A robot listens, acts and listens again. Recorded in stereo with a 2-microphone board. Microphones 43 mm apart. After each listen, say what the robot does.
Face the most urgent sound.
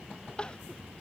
Turn 20° left.
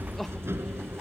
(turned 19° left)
Keep listening.
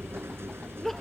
Facing the crying.